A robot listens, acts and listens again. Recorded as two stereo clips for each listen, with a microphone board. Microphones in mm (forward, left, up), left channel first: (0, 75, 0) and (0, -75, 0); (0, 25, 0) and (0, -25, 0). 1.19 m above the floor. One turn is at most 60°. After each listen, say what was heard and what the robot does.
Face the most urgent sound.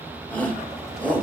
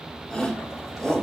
Turn 30° left.
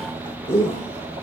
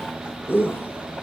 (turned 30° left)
So it is at 135° left. Turn 60° left.
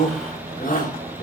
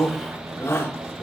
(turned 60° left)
The shout is now 80° left. Turn 60° left.
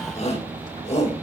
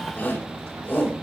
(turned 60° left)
The shout is now 45° left. Turn 45° left.
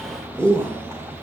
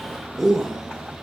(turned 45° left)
Found it: a shout, straight ahead, over 4 m away.